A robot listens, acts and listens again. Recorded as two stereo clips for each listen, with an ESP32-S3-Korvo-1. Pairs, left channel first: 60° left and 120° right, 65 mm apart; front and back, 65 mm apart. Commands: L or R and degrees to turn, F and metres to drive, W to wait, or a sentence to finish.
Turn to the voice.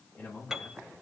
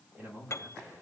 L120
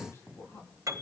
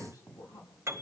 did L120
L15
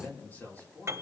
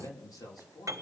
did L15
Found it: a man speaking, straight ahead.